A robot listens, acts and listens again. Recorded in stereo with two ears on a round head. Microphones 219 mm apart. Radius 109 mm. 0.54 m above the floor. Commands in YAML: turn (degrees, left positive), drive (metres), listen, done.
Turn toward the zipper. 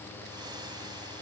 listen: true
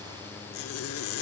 turn: 65
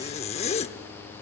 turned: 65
turn: 30
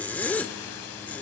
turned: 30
done: "Found it: a zipper, straight ahead."